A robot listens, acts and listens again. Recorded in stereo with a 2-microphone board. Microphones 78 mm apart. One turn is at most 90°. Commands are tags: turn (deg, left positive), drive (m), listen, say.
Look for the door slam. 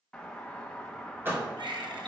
<turn deg="-25"/>
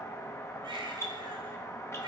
<listen/>
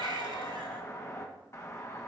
<say>I heard a door slam, but can't make it out now. It was about straight ahead or 130° right.</say>